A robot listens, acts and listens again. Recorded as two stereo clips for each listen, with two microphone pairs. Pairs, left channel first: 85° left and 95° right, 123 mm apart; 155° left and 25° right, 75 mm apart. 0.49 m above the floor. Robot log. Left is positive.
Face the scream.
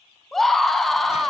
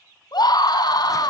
note: The scream: 175° left.
cmd yaw +175
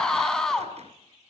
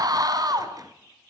end: Found it: a scream, straight ahead.